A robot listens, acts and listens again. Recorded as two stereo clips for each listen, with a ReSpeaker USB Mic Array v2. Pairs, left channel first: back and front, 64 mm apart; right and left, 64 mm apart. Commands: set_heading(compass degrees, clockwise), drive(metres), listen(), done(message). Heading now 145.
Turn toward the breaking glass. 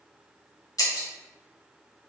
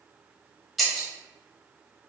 set_heading(325)
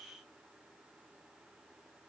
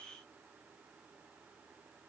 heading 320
done("I heard breaking glass from this way, but can't make it out now.")